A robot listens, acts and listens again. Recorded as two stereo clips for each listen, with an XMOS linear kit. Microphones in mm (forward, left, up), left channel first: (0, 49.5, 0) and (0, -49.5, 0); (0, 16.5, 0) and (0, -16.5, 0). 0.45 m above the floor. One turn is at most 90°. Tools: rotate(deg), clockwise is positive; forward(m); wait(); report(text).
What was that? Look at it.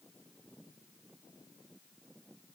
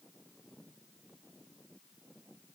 wait()
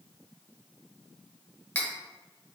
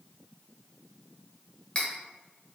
rotate(-25)
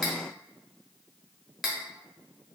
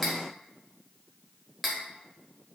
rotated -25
report("Facing the cutlery clinking.")